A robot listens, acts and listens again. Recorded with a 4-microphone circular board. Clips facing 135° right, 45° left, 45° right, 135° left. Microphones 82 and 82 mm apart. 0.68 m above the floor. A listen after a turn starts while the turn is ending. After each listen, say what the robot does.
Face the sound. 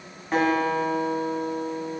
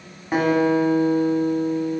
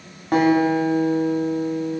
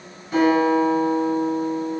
Turn 35° right.
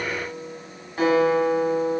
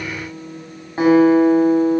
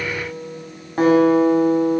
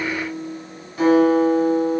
Turn 15° right.
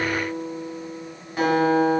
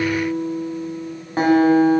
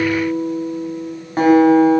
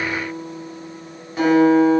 Facing the guitar.